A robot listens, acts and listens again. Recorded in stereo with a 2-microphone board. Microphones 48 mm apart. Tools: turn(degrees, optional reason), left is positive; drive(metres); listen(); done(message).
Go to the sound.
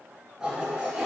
turn(degrees=-30)
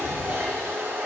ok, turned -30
turn(degrees=-135, reason="So it is at 135° right.")
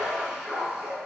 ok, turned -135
turn(degrees=-10, reason="The toilet flushing is now 10° right.")
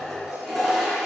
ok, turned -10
drive(metres=1.0)
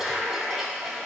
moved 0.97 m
drive(metres=1.0)
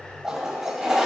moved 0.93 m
turn(degrees=-10, reason="The toilet flushing is now 10° right.")
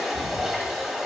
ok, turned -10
drive(metres=1.0)
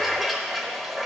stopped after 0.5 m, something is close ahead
done("I am next to the toilet flushing.")